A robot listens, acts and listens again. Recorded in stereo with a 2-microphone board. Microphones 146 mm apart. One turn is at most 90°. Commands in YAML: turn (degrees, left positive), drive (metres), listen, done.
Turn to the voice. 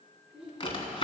turn: -40
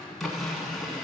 listen: true
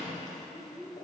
turn: -90
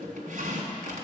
turn: -10
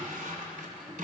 listen: true
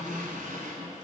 done: "Facing where the child speaking came from. I can't hear it now."